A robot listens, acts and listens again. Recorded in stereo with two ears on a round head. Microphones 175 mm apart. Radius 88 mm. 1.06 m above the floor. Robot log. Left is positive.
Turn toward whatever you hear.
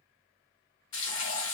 note: The frying: about 65° left or 115° left.
cmd yaw +65
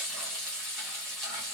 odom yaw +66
end: Facing the frying.